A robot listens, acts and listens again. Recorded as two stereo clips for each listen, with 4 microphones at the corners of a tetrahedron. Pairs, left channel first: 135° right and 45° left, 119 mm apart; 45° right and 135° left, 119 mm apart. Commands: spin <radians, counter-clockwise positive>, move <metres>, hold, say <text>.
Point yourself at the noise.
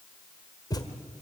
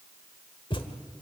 spin -1.48
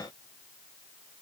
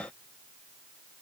say I heard a thud from this way, but can't make it out now.